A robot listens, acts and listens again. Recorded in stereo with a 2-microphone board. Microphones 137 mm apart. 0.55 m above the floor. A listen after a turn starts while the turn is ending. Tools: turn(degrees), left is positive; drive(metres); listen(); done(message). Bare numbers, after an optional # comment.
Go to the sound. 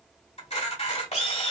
# The camera shutter: about 55° left or 125° left.
turn(55)
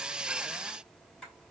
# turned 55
listen()
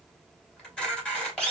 drive(1.0)
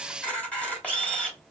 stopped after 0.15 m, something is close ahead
# The camera shutter is now 10° left.
turn(10)
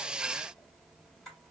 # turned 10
listen()
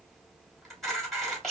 done("Blocked. The camera shutter is further on, straight ahead.")